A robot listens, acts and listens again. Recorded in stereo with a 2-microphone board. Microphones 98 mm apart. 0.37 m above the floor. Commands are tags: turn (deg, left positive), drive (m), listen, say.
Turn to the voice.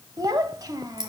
<turn deg="-40"/>
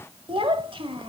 <turn deg="-90"/>
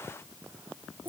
<turn deg="-25"/>
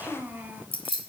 <turn deg="-20"/>
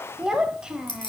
<turn deg="-10"/>
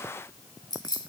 <listen/>
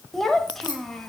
<say>Facing the child speaking, under 1 m away.</say>